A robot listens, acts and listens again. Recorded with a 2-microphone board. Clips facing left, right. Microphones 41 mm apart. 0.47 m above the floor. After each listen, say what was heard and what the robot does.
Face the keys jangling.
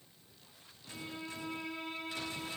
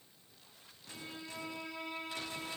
Keep listening.
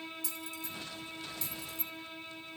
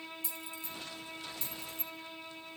The keys jangling: about 40° right or 140° right. Turn 40° right.
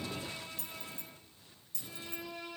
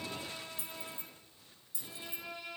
So it is at 20° right. Turn 20° right.
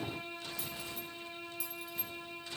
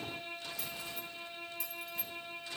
Keep listening.
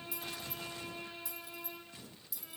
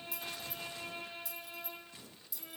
Facing the keys jangling, 2 to 4 m away.